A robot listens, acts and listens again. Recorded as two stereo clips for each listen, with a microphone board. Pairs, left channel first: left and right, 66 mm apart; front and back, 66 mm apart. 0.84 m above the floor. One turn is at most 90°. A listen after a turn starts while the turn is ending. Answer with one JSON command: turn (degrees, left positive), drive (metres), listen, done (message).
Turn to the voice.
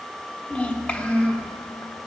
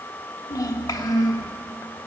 {"turn": 20}
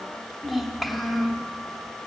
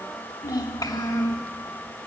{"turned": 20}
{"done": "Facing the child speaking, 1 to 2 m away."}